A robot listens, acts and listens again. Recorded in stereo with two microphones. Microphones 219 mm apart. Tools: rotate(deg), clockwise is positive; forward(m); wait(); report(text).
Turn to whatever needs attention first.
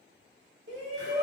rotate(60)
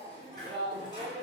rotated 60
rotate(25)
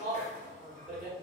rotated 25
report("Found it: a shout, straight ahead.")